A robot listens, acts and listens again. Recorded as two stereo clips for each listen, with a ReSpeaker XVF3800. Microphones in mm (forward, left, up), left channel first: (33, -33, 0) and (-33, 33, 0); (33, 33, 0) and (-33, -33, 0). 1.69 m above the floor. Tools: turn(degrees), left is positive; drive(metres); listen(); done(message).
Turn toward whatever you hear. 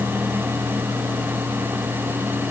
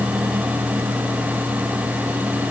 listen()
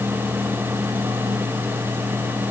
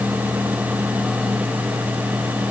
listen()
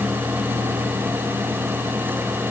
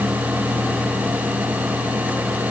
done("I can't make out anything to turn to.")